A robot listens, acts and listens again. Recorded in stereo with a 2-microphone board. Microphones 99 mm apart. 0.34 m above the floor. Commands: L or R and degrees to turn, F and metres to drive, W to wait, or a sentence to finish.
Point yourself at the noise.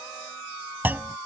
R20
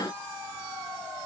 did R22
W
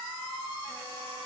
I heard a clunk, but can't make it out now. It was about straight ahead or 140° right.